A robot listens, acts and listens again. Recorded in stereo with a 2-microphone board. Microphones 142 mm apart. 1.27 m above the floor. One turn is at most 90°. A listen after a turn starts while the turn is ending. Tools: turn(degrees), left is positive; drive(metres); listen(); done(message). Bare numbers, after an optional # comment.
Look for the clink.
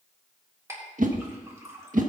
# The clink: about 20° right or 160° right.
turn(-20)
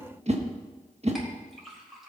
done("Facing the clink, 2 to 4 m away.")